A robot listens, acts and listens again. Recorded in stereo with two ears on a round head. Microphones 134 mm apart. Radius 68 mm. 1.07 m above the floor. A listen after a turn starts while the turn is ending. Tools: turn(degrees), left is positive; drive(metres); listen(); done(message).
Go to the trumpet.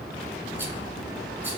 listen()
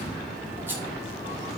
listen()
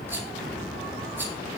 done("I can't make out a trumpet to turn to.")